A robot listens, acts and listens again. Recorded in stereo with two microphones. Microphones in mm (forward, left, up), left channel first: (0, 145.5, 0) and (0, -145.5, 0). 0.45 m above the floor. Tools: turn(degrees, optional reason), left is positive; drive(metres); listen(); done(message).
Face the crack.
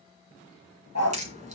turn(degrees=-25, reason="The crack: about 25° right or 155° right.")
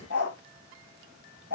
turn(degrees=-130, reason="So it is at 130° right.")
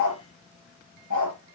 done("Facing where the crack came from. I can't hear it now.")